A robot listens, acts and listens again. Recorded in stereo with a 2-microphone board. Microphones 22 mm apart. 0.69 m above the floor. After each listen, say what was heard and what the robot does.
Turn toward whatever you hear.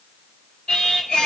The singing: about 40° left or 140° left. Turn 40° left.
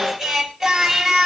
So it is at 10° right. Turn 10° right.
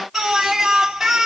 The singing is now 15° right. Turn 15° right.
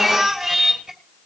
Found it: singing, straight ahead.